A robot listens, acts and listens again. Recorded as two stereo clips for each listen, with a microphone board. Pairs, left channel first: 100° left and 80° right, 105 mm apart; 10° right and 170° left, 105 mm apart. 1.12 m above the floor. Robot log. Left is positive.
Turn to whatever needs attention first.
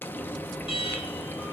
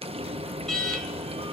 note: The alarm: 75° left.
cmd yaw +75
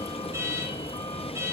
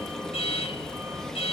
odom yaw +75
note: The alarm is now 20° right.
cmd yaw -20
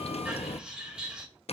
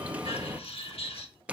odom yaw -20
end: Found it: an alarm, straight ahead.